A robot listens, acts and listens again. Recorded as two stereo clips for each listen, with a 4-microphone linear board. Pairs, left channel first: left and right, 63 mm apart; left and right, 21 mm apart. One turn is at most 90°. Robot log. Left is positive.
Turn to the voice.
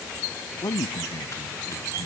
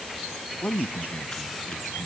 note: The man speaking: about 75° left or 105° left.
cmd yaw +75
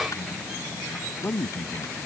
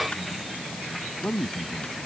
note: So it is at 25° left.
cmd yaw +25
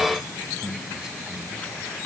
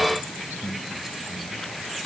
note: The man speaking is now 10° right.
cmd yaw -10
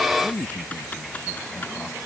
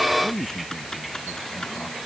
end: Found it: a man speaking, straight ahead.